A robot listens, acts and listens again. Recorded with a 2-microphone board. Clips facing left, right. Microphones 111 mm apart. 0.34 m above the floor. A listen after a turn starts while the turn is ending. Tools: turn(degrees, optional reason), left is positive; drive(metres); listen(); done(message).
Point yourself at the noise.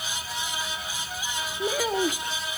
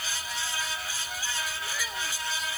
turn(degrees=50, reason="The child speaking: about 50° left or 130° left.")
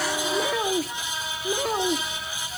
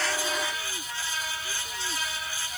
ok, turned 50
turn(degrees=80, reason="So it is at 80° left.")
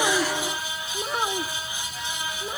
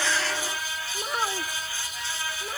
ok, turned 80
done("Facing the child speaking.")